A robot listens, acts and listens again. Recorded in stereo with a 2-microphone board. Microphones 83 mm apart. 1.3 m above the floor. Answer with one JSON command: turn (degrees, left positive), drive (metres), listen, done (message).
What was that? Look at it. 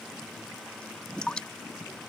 {"turn": 30}
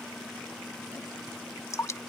{"turn": 140}
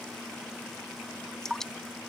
{"done": "Facing the dripping."}